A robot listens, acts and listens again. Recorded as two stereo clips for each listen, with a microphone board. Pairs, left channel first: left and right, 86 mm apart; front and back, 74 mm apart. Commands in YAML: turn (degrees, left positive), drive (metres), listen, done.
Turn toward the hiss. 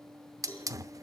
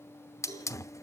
turn: -45
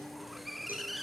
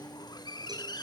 done: "Found it: a hiss, straight ahead."